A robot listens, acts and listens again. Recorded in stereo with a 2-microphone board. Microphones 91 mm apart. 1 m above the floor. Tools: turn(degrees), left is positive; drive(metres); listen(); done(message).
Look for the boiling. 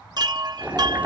turn(degrees=-15)
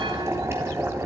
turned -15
turn(degrees=-150)
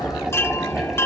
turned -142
done("Facing the boiling.")